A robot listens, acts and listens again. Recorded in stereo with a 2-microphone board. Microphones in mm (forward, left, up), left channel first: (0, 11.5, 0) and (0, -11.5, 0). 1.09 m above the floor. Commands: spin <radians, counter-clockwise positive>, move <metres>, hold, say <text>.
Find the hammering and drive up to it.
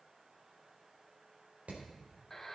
spin -1.57
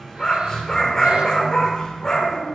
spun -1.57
hold
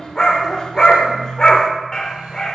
hold
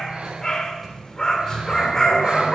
say I heard hammering from this way, but can't make it out now. I did not reach it.